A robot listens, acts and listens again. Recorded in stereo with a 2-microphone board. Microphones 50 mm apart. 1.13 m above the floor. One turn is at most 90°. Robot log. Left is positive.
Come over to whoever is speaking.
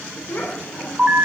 note: The child speaking: about 45° left or 135° left.
cmd yaw +45
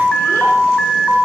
cmd idle
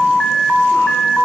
cmd idle
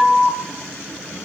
end: I heard a child speaking, but can't make it out now. It was about straight ahead or 90° left. I did not reach it.